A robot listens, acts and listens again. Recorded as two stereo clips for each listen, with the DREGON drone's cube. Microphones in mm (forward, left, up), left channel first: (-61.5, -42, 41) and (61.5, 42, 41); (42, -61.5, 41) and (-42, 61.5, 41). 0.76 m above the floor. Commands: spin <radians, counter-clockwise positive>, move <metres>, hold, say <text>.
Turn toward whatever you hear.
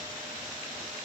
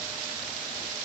hold
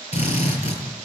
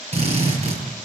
spin 2.97
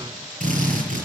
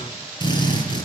say Found it: a drill, straight ahead.